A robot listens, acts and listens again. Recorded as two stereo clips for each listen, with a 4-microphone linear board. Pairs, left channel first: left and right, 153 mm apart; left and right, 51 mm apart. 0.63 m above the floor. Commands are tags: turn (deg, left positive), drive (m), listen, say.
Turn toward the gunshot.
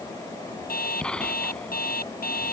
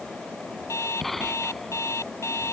<turn deg="30"/>
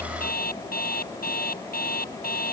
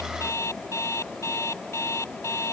<listen/>
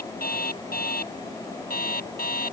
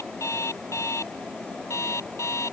<say>I heard a gunshot, but can't make it out now. It was about 25° right or 145° left.</say>